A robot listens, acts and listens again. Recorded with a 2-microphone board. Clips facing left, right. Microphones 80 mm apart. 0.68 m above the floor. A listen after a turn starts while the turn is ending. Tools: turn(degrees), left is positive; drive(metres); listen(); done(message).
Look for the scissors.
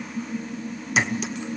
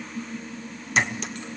listen()
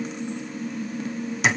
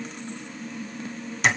listen()
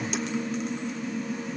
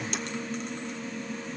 done("I can't make out scissors, only a clink.")